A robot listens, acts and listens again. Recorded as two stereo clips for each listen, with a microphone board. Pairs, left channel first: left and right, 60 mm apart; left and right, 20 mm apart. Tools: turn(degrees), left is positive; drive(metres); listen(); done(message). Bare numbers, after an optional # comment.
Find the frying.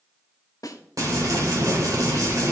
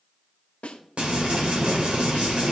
# The frying: about 75° right or 105° right.
turn(-75)
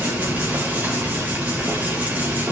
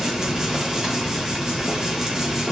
# So it is at 25° right.
turn(-25)
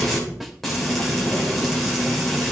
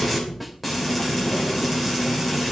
done("Found it: frying, straight ahead, 2 to 4 m away.")